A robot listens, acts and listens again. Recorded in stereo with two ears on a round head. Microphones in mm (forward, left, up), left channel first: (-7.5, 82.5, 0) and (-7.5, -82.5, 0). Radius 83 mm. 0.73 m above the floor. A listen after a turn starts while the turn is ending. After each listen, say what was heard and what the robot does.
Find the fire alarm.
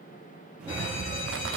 The fire alarm: about 70° left or 110° left. Turn 70° left.
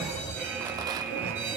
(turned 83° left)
So it is at 10° right. Turn 10° right.
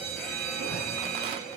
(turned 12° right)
Facing the fire alarm, over 4 m away.